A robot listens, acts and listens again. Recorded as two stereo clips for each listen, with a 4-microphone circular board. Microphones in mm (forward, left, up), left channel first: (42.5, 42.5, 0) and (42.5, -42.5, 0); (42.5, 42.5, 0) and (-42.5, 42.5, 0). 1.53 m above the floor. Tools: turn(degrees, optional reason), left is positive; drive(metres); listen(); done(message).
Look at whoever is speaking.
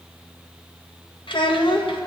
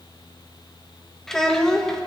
turn(degrees=85, reason="The child speaking: 85° left.")
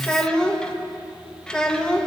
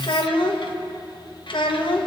turn(degrees=10, reason="The child speaking is now 10° left.")
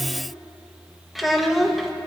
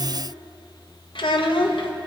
done("Found it: a child speaking, straight ahead, 1 to 2 m away.")